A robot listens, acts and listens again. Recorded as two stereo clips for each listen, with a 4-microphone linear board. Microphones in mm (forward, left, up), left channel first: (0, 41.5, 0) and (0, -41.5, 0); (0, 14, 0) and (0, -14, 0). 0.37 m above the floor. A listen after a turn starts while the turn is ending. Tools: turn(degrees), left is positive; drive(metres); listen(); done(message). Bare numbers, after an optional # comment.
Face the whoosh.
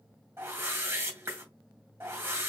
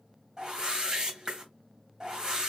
# The whoosh: about 25° right or 155° right.
turn(-25)
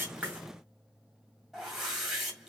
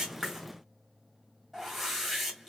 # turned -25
done("Facing the whoosh.")